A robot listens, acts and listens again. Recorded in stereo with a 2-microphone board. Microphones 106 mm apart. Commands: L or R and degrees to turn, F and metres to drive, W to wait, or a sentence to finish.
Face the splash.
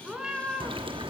R55
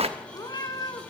R75
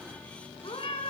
Facing where the splash came from. I can't hear it now.